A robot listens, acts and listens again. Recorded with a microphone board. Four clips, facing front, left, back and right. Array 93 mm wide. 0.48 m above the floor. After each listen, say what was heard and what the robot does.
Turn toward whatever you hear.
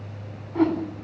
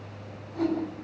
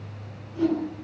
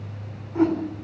The whoosh: 20° right. Turn 20° right.
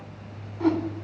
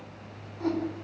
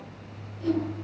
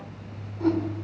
Facing the whoosh.